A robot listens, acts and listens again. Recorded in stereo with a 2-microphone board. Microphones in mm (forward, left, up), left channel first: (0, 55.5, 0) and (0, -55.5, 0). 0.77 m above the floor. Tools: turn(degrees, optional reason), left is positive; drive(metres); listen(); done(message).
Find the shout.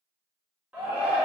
turn(degrees=-30)
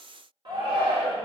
turn(degrees=-135, reason="So it is at 135° right.")
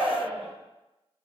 turn(degrees=-65, reason="The shout is now 65° right.")
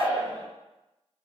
turn(degrees=-30, reason="The shout is now 30° right.")
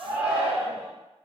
turn(degrees=-10, reason="The shout is now 10° right.")
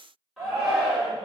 done("Found it: a shout, straight ahead, 1 to 2 m away.")